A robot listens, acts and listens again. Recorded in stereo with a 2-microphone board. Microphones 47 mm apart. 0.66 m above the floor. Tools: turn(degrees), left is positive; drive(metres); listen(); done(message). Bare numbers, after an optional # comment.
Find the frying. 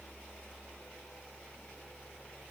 listen()
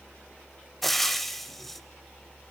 turn(30)
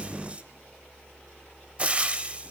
# So it is at 25° right.
turn(-25)
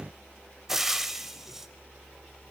done("Found it: frying, straight ahead, 1 to 2 m away.")